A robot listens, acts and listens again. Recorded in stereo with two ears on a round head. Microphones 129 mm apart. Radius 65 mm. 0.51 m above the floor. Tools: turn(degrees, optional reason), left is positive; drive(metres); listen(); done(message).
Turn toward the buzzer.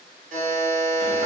turn(degrees=-55, reason="The buzzer: about 55° right or 125° right.")
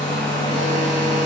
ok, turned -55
listen()
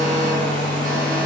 listen()
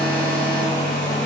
done("I heard a buzzer, but can't make it out now. It was about straight ahead or 70° right.")